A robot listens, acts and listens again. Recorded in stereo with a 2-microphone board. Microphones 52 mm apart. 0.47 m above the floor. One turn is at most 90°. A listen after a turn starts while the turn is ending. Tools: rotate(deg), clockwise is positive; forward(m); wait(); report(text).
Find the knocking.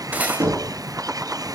rotate(40)
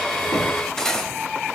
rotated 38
wait()
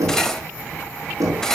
rotate(90)
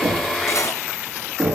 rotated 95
report("Facing the knocking, over 4 m away.")